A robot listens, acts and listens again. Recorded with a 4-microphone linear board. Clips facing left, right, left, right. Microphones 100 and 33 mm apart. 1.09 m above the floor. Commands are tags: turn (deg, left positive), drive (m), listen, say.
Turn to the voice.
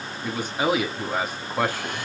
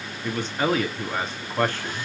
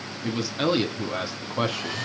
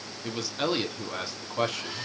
<turn deg="30"/>
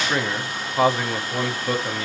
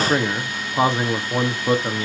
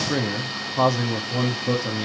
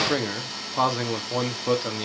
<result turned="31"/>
<turn deg="-20"/>
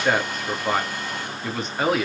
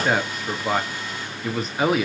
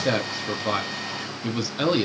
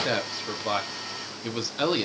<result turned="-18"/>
<say>Facing the man speaking.</say>